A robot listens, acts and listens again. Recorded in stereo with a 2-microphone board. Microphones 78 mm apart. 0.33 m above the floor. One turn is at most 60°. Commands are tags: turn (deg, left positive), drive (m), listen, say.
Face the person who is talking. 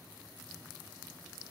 <listen/>
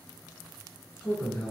<turn deg="20"/>
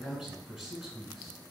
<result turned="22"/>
<turn deg="30"/>
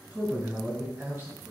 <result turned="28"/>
<turn deg="-25"/>
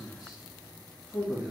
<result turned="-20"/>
<say>Facing the man speaking, over 4 m away.</say>